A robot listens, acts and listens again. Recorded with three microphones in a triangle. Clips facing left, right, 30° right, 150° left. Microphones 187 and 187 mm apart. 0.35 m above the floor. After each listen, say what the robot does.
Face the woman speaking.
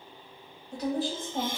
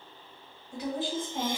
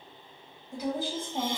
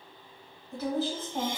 Turn 50° left.
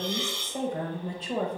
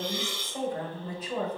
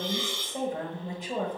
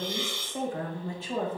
Turn 45° left.
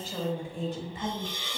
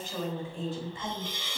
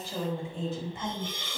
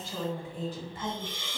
Turn 30° left.
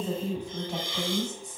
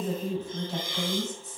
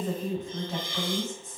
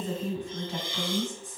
Turn 15° left.
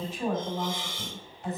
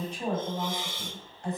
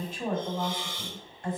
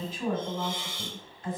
Found it: a woman speaking, straight ahead.